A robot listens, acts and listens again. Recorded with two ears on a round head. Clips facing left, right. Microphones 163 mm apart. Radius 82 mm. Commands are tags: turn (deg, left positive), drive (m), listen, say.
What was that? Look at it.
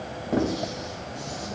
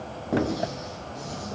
<turn deg="-30"/>
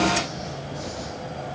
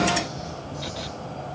<listen/>
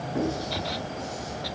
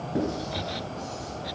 <turn deg="-145"/>
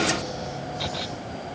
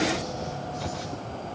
<listen/>
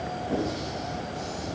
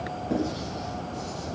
<turn deg="-30"/>
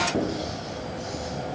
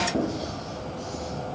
<turn deg="10"/>
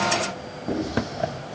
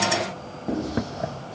<say>Found it: writing, straight ahead, over 4 m away.</say>